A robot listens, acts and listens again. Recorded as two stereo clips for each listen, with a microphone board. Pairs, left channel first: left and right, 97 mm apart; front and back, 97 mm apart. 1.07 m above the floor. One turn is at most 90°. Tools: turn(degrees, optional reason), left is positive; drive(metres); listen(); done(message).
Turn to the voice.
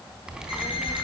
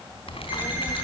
turn(degrees=60, reason="The child speaking: 60° left.")
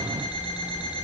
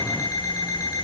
listen()
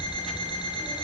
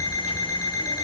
listen()
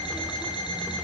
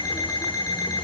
done("I heard a child speaking from this way, but can't make it out now.")